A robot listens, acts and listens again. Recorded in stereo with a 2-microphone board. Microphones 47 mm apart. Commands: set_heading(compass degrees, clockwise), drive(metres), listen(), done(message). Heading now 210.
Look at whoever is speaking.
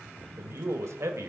set_heading(275)
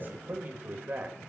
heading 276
set_heading(321)
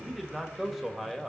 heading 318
done("Facing the man speaking, 1 to 2 m away.")